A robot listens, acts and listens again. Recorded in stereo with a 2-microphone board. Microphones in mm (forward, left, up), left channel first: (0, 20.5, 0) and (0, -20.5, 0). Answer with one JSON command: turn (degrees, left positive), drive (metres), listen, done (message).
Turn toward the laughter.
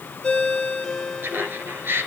{"turn": -60}
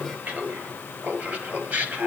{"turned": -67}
{"turn": -50}
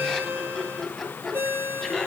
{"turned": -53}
{"done": "Found it: laughter, straight ahead."}